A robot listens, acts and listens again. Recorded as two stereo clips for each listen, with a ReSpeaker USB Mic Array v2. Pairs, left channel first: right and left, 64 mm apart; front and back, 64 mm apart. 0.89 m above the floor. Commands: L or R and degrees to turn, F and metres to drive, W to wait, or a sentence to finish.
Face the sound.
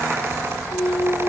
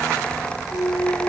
R40
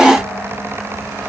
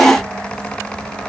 I heard a clunk from this way, but can't make it out now.